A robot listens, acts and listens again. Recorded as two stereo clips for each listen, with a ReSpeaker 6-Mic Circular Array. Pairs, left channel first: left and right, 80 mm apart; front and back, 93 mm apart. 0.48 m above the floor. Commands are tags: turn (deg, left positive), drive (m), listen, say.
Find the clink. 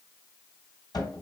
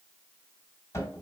<listen/>
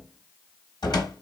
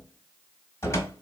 <listen/>
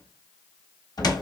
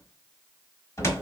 <say>I can't make out a clink, only a cupboard door.</say>